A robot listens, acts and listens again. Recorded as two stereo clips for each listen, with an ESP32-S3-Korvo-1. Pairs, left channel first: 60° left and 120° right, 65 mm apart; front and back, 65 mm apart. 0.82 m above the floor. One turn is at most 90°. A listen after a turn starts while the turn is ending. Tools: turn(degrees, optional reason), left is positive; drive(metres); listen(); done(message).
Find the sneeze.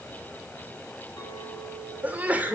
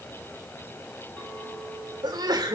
turn(degrees=90, reason="The sneeze: 175° left.")
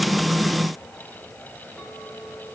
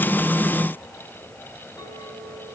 turn(degrees=85, reason="Nothing new. It was at 85° left.")
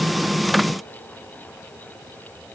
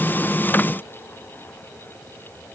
done("I heard a sneeze from this way, but can't make it out now.")